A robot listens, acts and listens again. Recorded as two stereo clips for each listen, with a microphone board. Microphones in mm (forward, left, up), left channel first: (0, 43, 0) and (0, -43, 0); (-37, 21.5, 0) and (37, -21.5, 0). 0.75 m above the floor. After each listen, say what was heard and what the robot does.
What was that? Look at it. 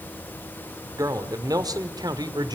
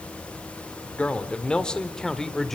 The man speaking: 125° right. Turn 125° right.
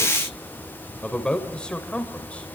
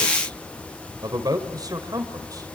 The man speaking is now 15° left. Turn 15° left.
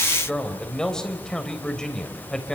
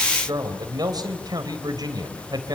The man speaking is now 10° left. Turn 10° left.
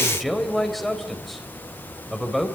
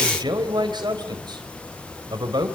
Facing the man speaking, 2 to 4 m away.